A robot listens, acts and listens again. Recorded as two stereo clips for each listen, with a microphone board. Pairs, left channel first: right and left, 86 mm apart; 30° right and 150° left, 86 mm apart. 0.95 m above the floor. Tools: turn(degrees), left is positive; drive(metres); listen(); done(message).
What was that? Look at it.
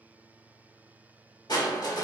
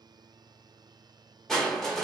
turn(degrees=-115)
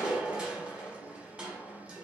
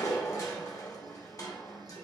turn(degrees=15)
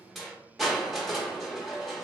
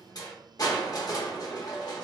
done("Found it: crushing, straight ahead.")